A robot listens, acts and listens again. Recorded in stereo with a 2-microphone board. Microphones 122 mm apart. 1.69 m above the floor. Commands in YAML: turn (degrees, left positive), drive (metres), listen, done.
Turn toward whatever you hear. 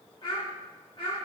turn: 50
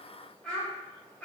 turn: 15
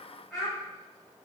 done: "Found it: a child speaking, straight ahead, 2 to 4 m away."